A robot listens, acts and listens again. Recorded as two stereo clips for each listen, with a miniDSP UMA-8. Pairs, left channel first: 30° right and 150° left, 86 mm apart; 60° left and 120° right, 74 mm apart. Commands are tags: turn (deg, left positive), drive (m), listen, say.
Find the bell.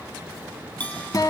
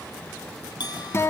<turn deg="45"/>
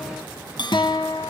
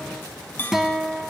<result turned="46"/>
<say>Facing the bell, 2 to 4 m away.</say>